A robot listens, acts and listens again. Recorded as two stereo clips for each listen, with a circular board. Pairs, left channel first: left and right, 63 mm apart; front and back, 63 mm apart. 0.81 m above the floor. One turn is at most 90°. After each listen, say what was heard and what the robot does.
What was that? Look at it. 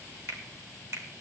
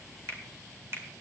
The finger snap: 135° right. Turn 90° right.
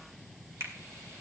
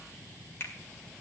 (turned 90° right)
The finger snap is now 50° right. Turn 50° right.
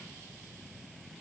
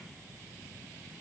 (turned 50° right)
Keep listening.
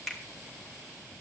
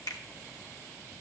Found it: a finger snap, straight ahead, 2 to 4 m away.